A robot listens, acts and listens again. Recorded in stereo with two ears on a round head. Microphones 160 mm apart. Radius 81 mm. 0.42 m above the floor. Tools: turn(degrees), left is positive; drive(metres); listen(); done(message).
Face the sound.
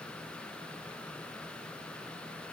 listen()
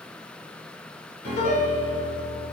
turn(degrees=45)
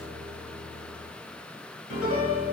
turn(degrees=90)
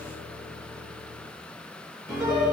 done("Found it: a piano, straight ahead, 1 to 2 m away.")